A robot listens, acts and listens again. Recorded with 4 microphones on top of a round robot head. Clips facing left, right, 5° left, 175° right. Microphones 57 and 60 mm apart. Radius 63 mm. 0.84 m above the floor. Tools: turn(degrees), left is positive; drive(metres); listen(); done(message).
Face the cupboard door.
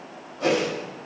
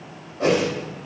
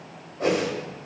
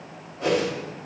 listen()
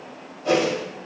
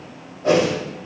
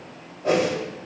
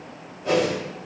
listen()
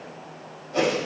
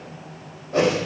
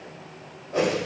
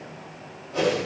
done("I can't make out a cupboard door, only a whoosh.")